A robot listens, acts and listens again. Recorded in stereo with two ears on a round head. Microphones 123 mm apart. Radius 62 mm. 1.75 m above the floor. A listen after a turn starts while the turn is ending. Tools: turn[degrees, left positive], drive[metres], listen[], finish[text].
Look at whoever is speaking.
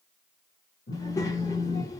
Thought: The child speaking: about 25° left or 155° left.
Action: turn[25]
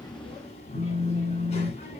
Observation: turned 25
Thought: So it is at 130° left.
Action: turn[130]
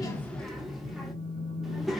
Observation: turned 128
Action: finish[Facing the child speaking, 1 to 2 m away.]